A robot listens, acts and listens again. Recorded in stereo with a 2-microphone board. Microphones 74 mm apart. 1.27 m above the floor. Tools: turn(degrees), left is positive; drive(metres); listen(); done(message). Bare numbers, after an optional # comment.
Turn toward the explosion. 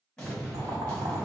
turn(30)
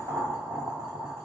listen()
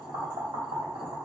done("I heard an explosion, but can't make it out now. It was about 20° right or 140° left.")